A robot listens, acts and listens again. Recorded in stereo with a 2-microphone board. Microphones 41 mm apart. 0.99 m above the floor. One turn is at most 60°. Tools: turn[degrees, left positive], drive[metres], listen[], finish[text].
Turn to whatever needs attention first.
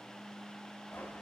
Action: listen[]
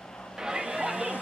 Action: turn[-30]
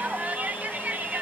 Thought: So it is at 135° right.
Action: turn[-60]
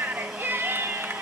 Thought: The shout is now 90° right.
Action: turn[-60]
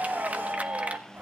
Thought: The shout is now 45° right.
Action: turn[-45]
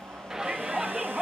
Thought: The shout is now 20° right.
Action: turn[-20]
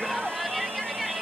Action: finish[Found it: a shout, straight ahead, 1 to 2 m away.]